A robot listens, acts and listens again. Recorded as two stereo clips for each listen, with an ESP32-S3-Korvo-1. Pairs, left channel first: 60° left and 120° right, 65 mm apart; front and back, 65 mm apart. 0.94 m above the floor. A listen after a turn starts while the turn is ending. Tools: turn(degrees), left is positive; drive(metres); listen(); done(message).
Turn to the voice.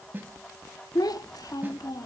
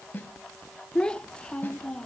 turn(degrees=75)
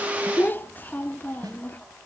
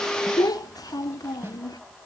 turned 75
done("Facing the child speaking, under 1 m away.")